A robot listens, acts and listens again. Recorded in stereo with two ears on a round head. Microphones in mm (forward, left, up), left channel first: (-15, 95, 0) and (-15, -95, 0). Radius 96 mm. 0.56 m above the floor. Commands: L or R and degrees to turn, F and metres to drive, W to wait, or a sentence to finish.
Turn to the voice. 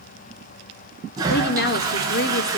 L50
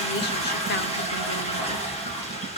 L65
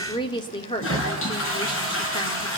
L25
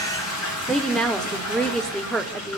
Facing the woman speaking, 1 to 2 m away.